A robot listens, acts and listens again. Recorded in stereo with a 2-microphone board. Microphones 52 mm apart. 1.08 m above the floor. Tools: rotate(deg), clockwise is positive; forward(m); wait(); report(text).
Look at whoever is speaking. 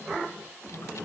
wait()
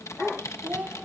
rotate(35)
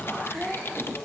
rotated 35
report("Facing the child speaking.")